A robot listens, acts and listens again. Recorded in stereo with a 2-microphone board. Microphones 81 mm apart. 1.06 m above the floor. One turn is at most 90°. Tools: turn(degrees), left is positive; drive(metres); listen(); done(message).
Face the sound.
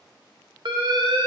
turn(degrees=-70)
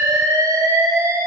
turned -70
turn(degrees=-40)
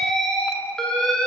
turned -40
turn(degrees=10)
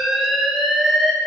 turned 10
done("Found it: an alarm, straight ahead, under 1 m away.")